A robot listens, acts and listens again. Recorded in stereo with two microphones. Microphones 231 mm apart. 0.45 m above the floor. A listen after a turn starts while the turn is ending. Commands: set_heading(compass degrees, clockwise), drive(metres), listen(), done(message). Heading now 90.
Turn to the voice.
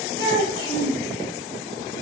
set_heading(0)
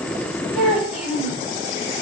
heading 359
done("Facing the child speaking.")